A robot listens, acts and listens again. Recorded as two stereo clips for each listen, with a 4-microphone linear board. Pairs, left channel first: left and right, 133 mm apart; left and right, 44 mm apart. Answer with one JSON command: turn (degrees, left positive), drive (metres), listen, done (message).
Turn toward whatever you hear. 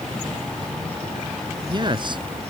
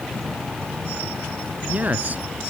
{"turn": -35}
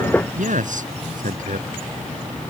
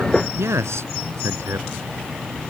{"turn": -105}
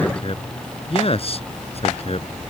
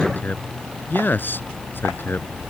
{"turn": 50}
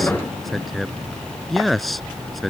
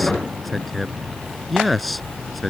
{"done": "Facing the man speaking."}